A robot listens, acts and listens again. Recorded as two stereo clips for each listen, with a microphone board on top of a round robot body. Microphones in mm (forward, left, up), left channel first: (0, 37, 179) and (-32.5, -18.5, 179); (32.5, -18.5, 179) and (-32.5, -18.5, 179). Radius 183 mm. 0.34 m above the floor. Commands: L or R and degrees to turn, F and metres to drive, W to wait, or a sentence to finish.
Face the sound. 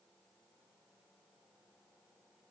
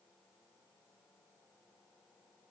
W
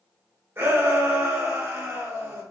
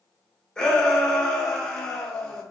R75
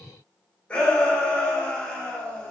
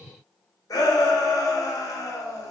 R10
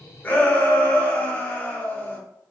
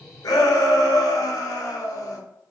Facing the shout, 1 to 2 m away.